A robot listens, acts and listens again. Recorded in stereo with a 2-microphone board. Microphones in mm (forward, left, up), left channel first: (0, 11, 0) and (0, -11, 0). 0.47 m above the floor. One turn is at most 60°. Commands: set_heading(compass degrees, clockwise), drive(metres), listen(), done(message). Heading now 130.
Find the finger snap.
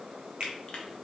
set_heading(170)
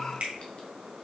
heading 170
set_heading(230)
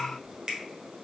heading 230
set_heading(265)
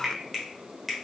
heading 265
done("Found it: a finger snap, straight ahead.")